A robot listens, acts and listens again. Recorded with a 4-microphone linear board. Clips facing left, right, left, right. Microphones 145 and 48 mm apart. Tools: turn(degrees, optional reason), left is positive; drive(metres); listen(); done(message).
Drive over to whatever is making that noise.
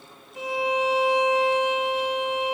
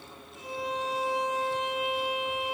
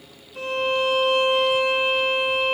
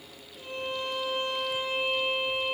turn(degrees=90)
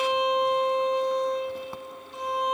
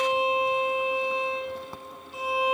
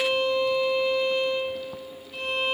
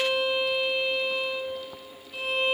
drive(metres=1.0)
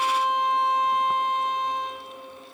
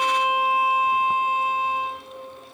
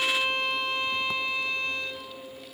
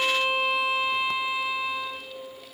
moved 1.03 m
turn(degrees=-10, reason="The violin is now 10° right.")
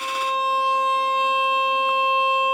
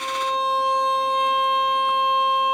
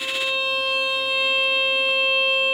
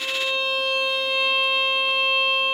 drive(metres=1.0)
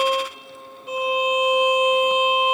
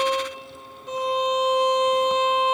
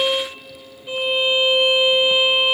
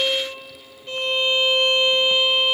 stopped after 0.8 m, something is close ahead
turn(degrees=10, reason="The violin is now 10° left.")
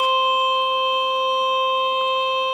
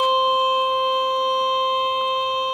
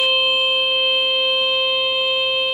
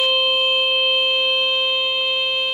done("I am next to the violin.")